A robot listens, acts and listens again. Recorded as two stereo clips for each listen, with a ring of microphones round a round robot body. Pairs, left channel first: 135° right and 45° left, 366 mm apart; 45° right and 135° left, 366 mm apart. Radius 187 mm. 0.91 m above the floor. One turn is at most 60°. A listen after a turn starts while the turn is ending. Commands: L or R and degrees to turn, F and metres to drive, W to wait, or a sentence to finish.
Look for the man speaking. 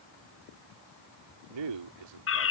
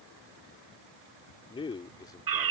L35
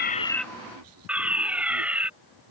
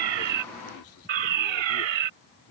L20
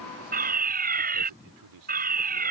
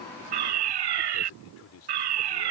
L10
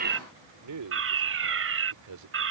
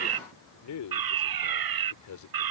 Found it: a man speaking, straight ahead.